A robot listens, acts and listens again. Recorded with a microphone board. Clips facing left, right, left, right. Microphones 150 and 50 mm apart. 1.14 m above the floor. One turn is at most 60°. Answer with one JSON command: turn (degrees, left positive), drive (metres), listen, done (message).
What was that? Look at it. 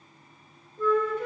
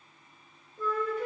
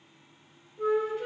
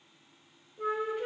{"turn": -30}
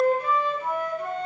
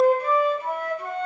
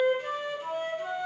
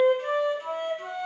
{"turn": -60}
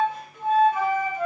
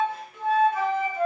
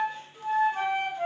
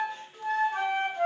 {"turn": -60}
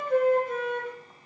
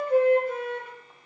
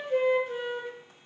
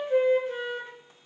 {"turn": -30}
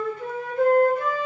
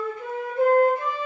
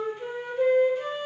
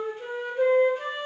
{"turn": -20}
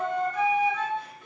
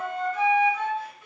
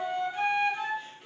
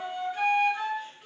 {"done": "Facing the flute, under 1 m away."}